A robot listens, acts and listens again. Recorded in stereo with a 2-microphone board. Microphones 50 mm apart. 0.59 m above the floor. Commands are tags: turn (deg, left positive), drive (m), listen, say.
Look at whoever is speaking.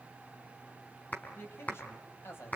<turn deg="55"/>
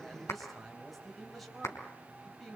<say>Found it: a man speaking, straight ahead, 2 to 4 m away.</say>